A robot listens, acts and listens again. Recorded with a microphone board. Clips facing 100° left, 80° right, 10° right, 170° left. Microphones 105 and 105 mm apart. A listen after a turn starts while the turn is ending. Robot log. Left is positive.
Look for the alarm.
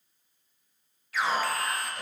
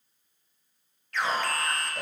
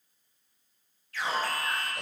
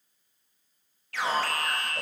note: The alarm: 175° right.
cmd yaw -175
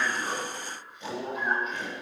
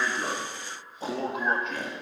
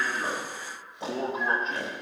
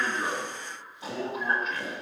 note: The alarm is now 70° right.
cmd yaw -70
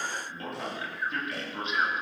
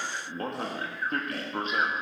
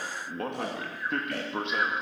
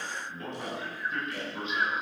note: The alarm is now 35° right.
cmd yaw -35
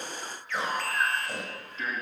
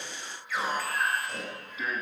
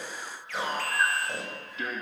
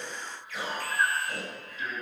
end: Found it: an alarm, straight ahead, 2 to 4 m away.